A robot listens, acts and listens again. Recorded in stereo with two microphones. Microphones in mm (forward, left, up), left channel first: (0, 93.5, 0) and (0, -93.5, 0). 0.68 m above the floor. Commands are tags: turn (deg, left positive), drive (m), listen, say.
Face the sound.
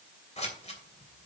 <turn deg="35"/>
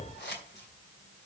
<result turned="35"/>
<turn deg="105"/>
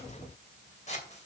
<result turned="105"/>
<turn deg="40"/>
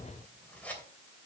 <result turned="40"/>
<turn deg="10"/>
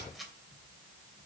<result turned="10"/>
<say>Found it: scissors, straight ahead, 2 to 4 m away.</say>